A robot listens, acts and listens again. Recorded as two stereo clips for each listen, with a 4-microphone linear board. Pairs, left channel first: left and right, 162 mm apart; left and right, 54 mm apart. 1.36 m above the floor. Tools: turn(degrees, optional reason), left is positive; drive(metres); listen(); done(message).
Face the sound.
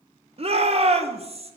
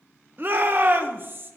turn(degrees=-40, reason="The shout: about 40° right or 140° right.")
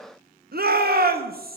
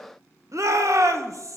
turn(degrees=-100, reason="So it is at 100° right.")
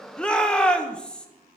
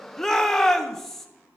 done("Facing the shout.")